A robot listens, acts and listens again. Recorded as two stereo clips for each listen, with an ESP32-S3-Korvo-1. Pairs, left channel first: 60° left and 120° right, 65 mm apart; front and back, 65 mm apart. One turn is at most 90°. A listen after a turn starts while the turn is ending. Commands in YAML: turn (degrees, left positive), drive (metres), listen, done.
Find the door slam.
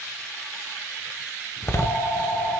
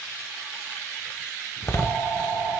turn: 35
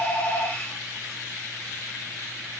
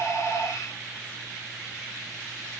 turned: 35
done: "Facing where the door slam came from. I can't hear it now."